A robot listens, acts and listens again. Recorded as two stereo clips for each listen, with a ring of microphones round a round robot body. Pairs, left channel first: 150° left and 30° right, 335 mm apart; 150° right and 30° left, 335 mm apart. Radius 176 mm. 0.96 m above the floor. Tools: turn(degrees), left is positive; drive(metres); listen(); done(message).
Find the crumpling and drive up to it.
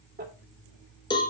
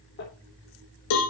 turn(degrees=-95)
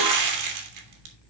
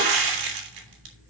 drive(metres=1.0)
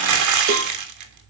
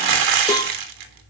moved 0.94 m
drive(metres=1.0)
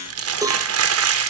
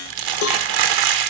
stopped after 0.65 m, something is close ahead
turn(degrees=15)
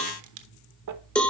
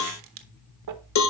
done("Arrived at the crumpling, straight ahead.")